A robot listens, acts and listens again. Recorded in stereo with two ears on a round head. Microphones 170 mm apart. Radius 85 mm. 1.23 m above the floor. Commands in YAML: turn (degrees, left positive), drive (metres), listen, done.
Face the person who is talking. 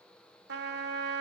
listen: true
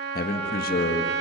turn: 55
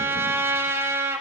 listen: true
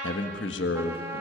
turn: 70
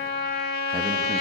listen: true
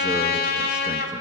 listen: true
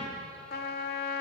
done: "Facing where the man speaking came from. I can't hear it now."